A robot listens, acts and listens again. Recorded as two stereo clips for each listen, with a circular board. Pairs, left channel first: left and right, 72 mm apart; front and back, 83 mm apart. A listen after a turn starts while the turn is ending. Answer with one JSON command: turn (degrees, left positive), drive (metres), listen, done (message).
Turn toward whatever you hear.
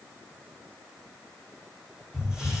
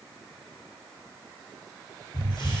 {"turn": -10}
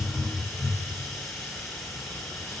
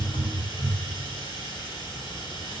{"done": "Facing the hiss."}